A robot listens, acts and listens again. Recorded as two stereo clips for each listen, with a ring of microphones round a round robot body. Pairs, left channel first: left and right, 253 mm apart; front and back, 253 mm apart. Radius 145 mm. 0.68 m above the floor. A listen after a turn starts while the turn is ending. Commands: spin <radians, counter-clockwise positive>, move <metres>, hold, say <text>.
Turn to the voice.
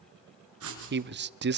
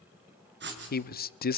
spin -0.87
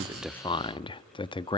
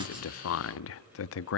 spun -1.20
spin 0.35
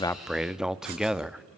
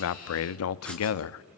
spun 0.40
say Found it: a man speaking, straight ahead, under 1 m away.